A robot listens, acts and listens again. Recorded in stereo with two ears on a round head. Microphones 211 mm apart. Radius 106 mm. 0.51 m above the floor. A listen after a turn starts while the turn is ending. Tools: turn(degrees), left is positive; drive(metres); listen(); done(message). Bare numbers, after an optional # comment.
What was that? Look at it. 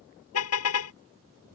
# The car horn: about 70° left or 110° left.
turn(70)
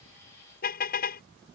# So it is at 40° left.
turn(40)
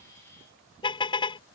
# The car horn is now 20° left.
turn(20)
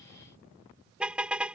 done("Found it: a car horn, straight ahead.")